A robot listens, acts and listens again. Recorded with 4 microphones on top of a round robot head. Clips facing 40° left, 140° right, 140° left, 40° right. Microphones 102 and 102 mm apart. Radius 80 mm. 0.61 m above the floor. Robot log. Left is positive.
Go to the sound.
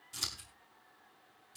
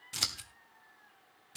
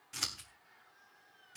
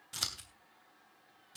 note: The scissors: 115° right.
cmd yaw -115
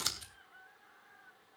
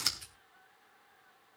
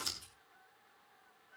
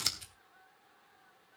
note: The scissors is now 35° right.
cmd yaw -35
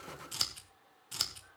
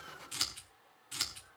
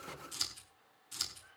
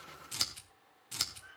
note: The scissors is now 15° right.
cmd yaw -15
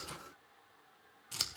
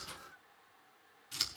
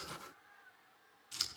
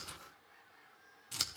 cmd fwd 1.0
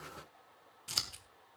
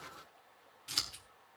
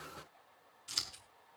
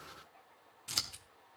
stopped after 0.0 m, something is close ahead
end: Something is in my way. I am facing the scissors but have not reached it.